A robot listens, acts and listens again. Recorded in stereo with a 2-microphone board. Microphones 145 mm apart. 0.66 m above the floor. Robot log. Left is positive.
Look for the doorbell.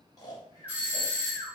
cmd yaw -30
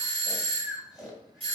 note: So it is at 135° right.
cmd yaw -135
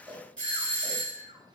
note: The doorbell is now 10° left.
cmd yaw +10
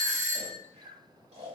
end: Found it: a doorbell, straight ahead.